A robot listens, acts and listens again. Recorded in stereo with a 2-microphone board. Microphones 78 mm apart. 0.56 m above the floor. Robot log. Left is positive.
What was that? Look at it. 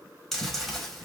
cmd yaw +30
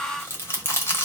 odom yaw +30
note: So it is at 145° left.
cmd yaw +145
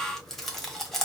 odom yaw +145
end: Facing the chewing, 1 to 2 m away.